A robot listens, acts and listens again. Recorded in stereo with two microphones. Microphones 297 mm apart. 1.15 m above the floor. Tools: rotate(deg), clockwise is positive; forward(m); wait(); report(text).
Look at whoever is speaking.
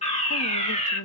rotate(-90)
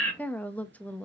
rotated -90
report("Facing the woman speaking, under 1 m away.")